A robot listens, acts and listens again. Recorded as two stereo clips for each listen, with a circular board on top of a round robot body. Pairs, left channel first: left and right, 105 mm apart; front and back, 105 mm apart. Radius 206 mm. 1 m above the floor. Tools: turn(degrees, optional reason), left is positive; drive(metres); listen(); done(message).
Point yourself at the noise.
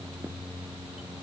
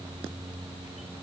listen()
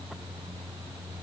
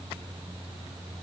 listen()
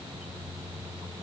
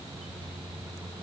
done("I can't make out anything.")